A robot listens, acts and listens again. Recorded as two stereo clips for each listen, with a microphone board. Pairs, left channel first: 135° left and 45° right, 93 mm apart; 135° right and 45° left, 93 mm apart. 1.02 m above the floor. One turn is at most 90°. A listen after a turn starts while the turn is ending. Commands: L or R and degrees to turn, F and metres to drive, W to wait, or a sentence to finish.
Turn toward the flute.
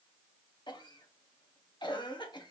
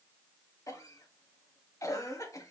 W
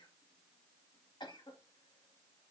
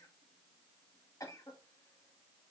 W
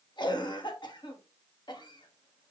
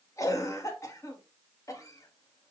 I can't make out a flute to turn to.